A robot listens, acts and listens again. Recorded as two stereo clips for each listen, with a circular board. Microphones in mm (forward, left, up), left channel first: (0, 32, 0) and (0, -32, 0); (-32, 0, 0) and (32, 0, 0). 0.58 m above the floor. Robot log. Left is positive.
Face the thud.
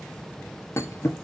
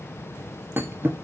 note: The thud: 50° left.
cmd yaw +50
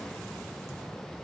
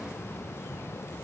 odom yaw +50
end: I heard a thud from this way, but can't make it out now.